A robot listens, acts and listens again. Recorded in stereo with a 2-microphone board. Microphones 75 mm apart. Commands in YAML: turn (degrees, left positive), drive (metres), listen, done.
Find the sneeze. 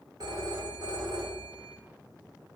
listen: true
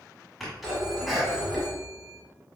turn: 30
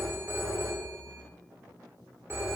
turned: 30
listen: true
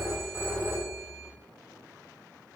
done: "I heard a sneeze, but can't make it out now. It was about 30° right or 150° left."